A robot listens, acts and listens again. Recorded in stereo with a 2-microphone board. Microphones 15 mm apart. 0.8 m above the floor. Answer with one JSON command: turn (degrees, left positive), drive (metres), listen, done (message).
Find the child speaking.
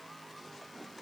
{"listen": true}
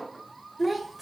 {"turn": 30}
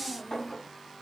{"turn": 150}
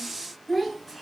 {"done": "Facing the child speaking, over 4 m away."}